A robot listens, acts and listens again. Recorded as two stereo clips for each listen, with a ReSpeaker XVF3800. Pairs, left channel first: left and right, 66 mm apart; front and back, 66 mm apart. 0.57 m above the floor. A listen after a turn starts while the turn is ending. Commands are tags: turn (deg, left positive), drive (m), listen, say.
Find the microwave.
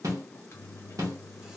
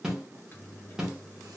<turn deg="50"/>
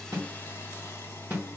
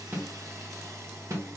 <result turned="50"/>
<say>Facing the microwave.</say>